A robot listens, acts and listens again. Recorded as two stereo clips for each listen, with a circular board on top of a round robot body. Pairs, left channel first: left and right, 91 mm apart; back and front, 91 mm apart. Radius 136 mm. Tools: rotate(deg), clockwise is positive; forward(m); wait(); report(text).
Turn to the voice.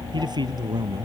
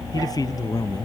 rotate(135)
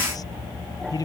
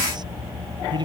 rotate(-40)
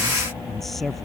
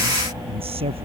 report("Found it: a man speaking, straight ahead.")